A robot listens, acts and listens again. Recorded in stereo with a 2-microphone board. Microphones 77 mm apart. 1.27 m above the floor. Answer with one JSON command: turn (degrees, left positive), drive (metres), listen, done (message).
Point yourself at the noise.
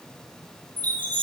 {"turn": 20}
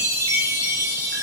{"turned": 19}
{"turn": 140}
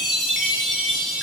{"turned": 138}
{"done": "Found it: a chime, straight ahead, 2 to 4 m away."}